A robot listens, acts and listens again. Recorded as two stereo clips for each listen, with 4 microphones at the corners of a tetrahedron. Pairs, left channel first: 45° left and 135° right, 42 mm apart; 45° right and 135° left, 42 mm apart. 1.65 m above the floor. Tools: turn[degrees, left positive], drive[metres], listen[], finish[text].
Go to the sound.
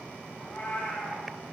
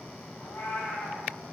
Thought: The cat meowing: 15° right.
Action: turn[-15]
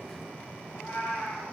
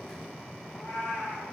Action: drive[1.0]
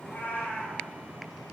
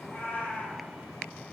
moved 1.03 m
Action: drive[1.0]
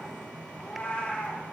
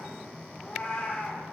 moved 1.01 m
Thought: The cat meowing is now 10° left.
Action: turn[10]
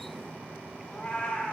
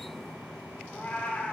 Action: drive[1.0]
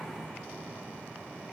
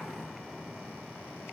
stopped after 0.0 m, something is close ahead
Action: listen[]
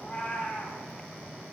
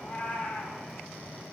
Action: finish[I am next to the cat meowing.]